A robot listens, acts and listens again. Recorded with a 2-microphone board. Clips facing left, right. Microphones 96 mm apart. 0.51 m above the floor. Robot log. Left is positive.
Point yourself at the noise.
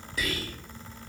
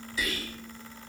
note: The whispering: about 60° left or 120° left.
cmd yaw +60
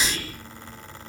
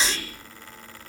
note: So it is at 30° left.
cmd yaw +30
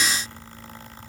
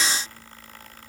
cmd idle
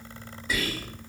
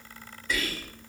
note: The whispering is now 10° left.
cmd yaw +10
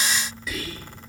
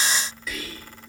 end: Found it: whispering, straight ahead.